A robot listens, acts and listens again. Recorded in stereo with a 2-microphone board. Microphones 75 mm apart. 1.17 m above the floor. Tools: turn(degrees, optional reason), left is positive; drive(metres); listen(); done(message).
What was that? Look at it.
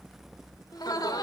turn(degrees=70, reason="The laughter: about 70° left or 110° left.")
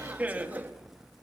turn(degrees=-25, reason="So it is at 25° right.")
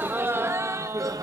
turn(degrees=-50, reason="The laughter is now 50° right.")
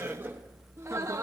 turn(degrees=-40, reason="The laughter is now 40° right.")
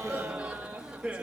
turn(degrees=-15, reason="The laughter is now 15° right.")
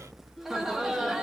done("Found it: laughter, straight ahead.")